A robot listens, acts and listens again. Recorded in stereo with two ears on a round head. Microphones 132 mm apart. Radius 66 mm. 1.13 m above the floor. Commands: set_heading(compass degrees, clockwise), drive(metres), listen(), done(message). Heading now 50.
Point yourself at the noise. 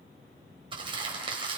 set_heading(85)
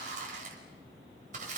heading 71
set_heading(196)
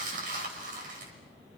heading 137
set_heading(197)
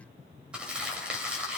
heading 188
done("Facing the crumpling, over 4 m away.")